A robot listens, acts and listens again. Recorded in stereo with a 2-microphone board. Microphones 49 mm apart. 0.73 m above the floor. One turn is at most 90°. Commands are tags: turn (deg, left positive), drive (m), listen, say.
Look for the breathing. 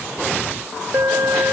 <listen/>
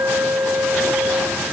<listen/>
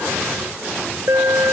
<say>I can't make out breathing, only an alarm.</say>